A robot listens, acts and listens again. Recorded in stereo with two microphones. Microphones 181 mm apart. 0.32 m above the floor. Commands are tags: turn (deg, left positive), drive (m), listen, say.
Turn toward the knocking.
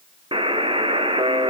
<listen/>
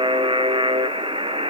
<listen/>
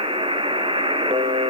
<say>I can't make out knocking, only a buzzer.</say>